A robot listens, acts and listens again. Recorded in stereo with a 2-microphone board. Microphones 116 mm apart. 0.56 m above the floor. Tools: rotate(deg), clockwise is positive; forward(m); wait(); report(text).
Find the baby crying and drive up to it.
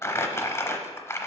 wait()
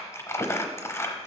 wait()
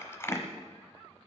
report("I can't make out a baby crying, only crumpling.")